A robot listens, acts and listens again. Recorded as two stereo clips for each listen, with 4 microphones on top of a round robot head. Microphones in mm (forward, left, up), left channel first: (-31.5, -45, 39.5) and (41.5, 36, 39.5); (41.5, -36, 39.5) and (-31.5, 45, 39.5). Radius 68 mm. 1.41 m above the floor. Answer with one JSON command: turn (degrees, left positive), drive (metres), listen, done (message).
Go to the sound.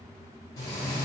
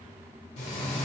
{"turn": -70}
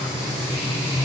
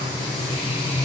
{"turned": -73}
{"drive": 1.0}
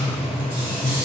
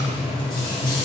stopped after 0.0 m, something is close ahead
{"done": "Something is in my way. I am facing the frying but have not reached it."}